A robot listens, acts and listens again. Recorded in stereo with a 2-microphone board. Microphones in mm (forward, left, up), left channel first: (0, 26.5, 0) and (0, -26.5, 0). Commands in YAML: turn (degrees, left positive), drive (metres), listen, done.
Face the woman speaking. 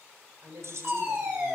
turn: -75
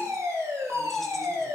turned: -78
listen: true
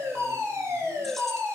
listen: true
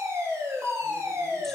done: "I heard a woman speaking, but can't make it out now. It was about 5° left or 30° right."